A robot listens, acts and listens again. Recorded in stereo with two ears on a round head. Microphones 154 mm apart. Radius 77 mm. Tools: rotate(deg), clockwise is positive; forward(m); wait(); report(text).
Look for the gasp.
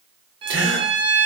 rotate(90)
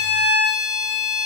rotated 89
report("I heard a gasp from this way, but can't make it out now.")